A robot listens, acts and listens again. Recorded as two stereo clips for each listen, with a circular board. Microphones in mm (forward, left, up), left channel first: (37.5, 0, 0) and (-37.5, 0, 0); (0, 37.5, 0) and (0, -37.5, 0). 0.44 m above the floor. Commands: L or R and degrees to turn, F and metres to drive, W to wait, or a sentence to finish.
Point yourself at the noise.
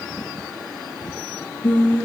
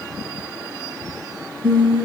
R75
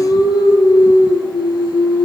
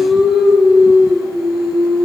Found it: singing, straight ahead, over 4 m away.